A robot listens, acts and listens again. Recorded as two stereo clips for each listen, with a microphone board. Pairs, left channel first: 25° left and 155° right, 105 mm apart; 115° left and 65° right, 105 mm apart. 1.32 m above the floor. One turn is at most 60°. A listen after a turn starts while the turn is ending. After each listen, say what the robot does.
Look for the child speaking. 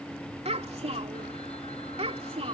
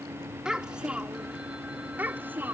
Turn 60° right.
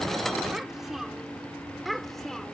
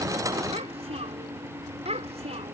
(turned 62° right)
Turn 60° right.
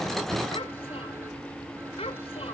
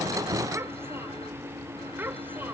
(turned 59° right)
Facing the child speaking.